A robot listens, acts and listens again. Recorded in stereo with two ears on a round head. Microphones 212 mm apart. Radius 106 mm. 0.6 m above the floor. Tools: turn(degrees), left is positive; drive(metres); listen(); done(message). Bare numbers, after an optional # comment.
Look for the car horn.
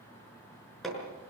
listen()
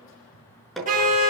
# The car horn: about 35° right or 145° right.
turn(-35)
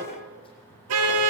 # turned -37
# So it is at 110° right.
turn(-110)
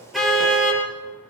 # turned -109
done("Facing the car horn, over 4 m away.")